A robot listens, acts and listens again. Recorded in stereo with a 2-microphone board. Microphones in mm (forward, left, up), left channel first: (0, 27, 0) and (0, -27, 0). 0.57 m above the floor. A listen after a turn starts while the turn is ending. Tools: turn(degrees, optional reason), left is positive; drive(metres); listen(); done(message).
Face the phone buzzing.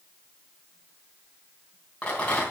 listen()
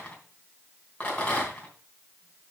listen()
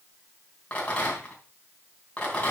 done("I can't make out a phone buzzing, only a rattle.")